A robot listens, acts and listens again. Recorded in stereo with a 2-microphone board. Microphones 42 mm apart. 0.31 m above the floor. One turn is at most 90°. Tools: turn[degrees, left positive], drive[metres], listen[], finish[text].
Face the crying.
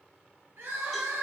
Thought: The crying: about 70° right or 110° right.
Action: turn[-70]
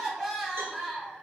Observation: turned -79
Action: finish[Facing the crying.]